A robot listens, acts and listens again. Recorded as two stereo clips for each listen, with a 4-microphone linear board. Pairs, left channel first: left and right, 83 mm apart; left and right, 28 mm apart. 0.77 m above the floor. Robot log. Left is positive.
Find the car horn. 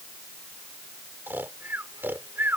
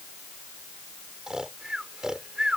cmd idle
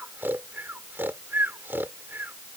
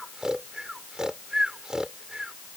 cmd idle
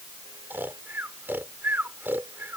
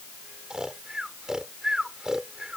end: I can't make out a car horn, only snoring.